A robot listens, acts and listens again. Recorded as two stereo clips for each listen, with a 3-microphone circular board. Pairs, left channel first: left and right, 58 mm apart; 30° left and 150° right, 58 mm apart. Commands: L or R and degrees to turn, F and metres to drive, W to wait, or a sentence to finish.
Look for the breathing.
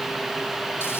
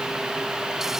W
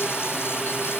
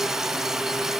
W
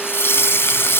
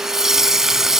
I can't make out breathing to turn to.